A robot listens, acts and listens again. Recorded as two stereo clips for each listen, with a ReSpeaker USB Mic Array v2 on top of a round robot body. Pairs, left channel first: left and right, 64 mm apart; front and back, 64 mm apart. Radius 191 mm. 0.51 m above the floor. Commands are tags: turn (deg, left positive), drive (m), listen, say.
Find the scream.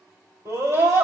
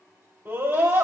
<turn deg="-130"/>
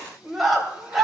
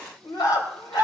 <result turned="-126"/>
<say>Found it: a scream, straight ahead.</say>